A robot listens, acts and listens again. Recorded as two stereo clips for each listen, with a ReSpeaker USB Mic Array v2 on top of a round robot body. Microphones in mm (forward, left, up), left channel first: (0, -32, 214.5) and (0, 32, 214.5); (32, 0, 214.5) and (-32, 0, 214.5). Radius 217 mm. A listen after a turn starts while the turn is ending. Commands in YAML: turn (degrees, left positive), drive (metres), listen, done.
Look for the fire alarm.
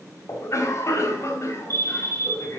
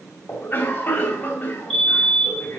turn: 80
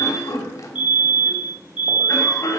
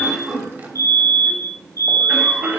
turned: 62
turn: 20
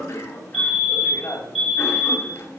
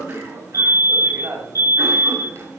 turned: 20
done: "Facing the fire alarm, over 4 m away."